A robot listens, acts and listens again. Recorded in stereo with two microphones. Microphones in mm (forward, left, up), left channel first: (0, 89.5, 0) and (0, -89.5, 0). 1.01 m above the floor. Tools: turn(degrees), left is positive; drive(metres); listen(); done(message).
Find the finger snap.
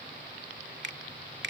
turn(degrees=-90)
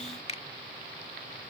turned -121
turn(degrees=35)
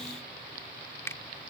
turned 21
turn(degrees=15)
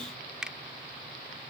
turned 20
done("Found it: a finger snap, straight ahead.")